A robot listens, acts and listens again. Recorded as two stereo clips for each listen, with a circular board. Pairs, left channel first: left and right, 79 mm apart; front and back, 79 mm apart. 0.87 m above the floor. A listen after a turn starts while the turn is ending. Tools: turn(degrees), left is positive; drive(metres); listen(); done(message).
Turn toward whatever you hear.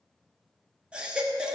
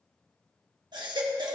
turn(degrees=-165)
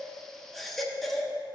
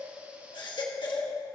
done("Facing the baby crying.")